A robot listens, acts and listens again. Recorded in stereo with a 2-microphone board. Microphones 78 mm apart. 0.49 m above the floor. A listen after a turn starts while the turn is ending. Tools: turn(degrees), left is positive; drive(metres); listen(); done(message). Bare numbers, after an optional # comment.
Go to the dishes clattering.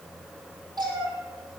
listen()
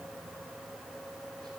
listen()
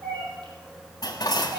# The dishes clattering: about 50° left or 130° left.
turn(50)
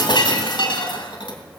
# So it is at 80° left.
turn(80)
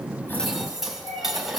drive(1.0)
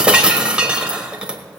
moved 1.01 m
# The dishes clattering is now 15° right.
turn(-15)
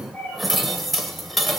drive(1.0)
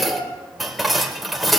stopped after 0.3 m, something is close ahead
done("I am next to the dishes clattering.")